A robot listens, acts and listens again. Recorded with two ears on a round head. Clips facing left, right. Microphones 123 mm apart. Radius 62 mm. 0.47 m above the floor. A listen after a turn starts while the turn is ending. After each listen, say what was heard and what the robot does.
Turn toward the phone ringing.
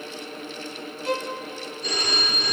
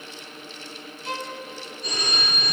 The phone ringing: about 60° left or 120° left. Turn 60° left.
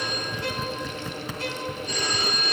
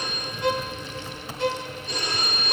So it is at 60° left. Turn 60° left.
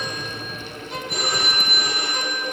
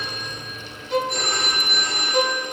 Facing the phone ringing, over 4 m away.